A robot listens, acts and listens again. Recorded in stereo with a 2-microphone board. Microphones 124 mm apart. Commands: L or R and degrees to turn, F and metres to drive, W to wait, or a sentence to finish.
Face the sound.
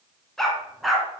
L30
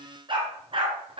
R45
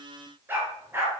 R20
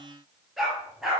Facing the dog barking, over 4 m away.